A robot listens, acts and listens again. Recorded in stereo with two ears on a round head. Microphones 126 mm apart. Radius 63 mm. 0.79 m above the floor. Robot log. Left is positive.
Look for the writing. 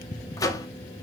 cmd idle
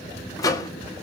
cmd idle
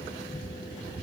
end: I can't make out writing, only a microwave.